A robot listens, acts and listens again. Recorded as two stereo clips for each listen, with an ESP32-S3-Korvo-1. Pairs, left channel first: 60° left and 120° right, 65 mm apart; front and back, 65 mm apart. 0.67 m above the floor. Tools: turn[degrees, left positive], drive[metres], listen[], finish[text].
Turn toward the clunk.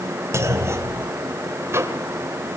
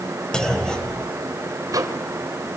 Thought: The clunk: 75° right.
Action: turn[-75]
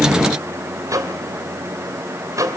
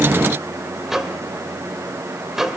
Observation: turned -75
Action: finish[I heard a clunk from this way, but can't make it out now.]